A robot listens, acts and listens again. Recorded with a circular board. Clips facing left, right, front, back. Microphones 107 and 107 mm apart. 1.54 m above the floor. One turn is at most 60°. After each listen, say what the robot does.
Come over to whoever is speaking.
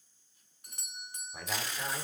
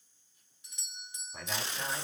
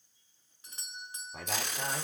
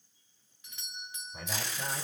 Drive 1.0 m forward.
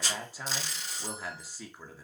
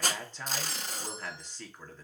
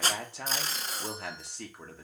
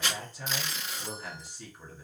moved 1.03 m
Turn 10° left.
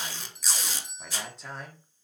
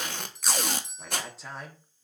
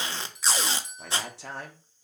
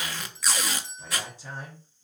Drive 1.0 m forward.
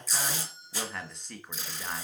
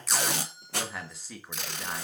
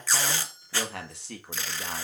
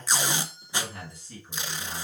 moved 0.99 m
Drive 1.0 m forward.
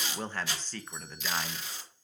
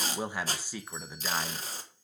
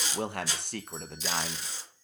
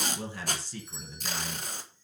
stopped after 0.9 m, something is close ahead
Turn 10° right.
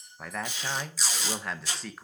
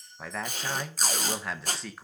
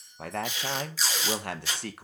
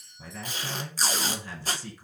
Arrived at the man speaking, straight ahead.